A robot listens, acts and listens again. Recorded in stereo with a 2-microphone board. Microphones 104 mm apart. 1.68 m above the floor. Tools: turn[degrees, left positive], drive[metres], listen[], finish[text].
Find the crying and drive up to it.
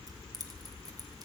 Action: listen[]
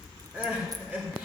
Action: turn[-30]
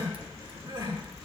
Thought: So it is at 135° right.
Action: turn[-135]
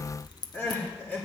Thought: The crying is now 20° left.
Action: turn[20]
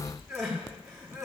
Action: drive[1.0]
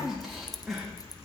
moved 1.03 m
Action: drive[1.0]
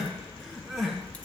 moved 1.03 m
Action: drive[1.0]
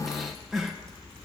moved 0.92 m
Action: drive[1.0]
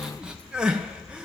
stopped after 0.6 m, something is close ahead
Thought: The crying is now 10° right.
Action: turn[-10]
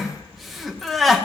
Action: finish[I am next to the crying.]